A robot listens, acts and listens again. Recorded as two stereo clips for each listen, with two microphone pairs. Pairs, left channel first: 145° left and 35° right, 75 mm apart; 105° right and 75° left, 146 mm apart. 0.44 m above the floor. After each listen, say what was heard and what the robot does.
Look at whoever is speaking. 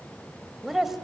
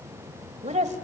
The woman speaking: 50° left. Turn 50° left.
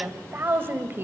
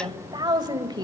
The woman speaking is now 20° left. Turn 20° left.
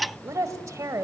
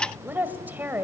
Found it: a woman speaking, straight ahead, 1 to 2 m away.